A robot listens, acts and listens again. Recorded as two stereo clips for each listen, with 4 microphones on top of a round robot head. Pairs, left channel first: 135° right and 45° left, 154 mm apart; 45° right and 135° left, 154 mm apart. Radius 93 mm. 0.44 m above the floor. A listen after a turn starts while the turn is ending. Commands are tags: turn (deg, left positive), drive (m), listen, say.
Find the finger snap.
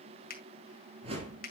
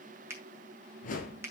<turn deg="-155"/>
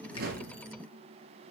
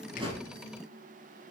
<listen/>
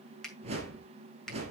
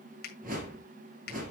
<turn deg="-45"/>
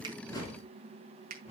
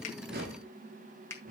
<turn deg="25"/>
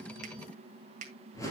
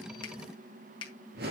<turn deg="10"/>
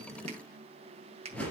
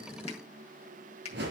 <say>Found it: a finger snap, straight ahead.</say>